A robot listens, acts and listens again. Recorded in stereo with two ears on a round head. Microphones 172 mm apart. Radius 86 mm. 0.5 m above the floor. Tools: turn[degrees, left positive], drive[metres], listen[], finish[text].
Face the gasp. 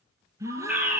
Thought: The gasp: about 15° right or 165° right.
Action: turn[-15]
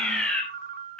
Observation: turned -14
Action: listen[]
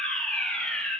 Action: finish[I heard a gasp, but can't make it out now. It was about straight ahead or 150° right.]